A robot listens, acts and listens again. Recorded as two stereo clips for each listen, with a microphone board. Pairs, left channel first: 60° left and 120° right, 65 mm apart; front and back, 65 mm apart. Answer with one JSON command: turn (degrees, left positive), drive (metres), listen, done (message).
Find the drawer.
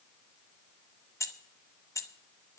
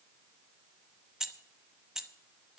{"listen": true}
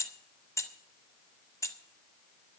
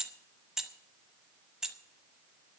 {"listen": true}
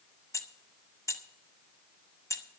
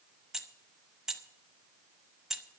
{"done": "I can't make out a drawer, only keys jangling."}